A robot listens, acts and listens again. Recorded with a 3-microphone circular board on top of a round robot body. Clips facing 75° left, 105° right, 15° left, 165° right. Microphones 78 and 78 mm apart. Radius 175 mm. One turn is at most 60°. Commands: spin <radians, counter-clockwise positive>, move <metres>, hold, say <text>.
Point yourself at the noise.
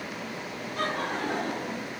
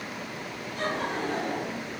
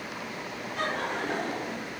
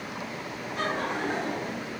spin 1.05
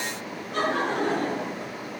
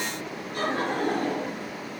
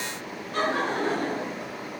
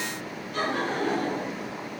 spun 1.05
spin 1.05
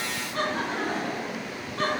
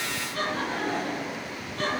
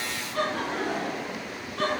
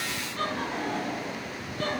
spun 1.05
spin 0.26
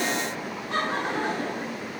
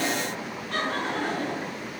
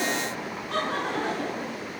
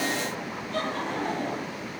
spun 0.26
say Facing the laughter.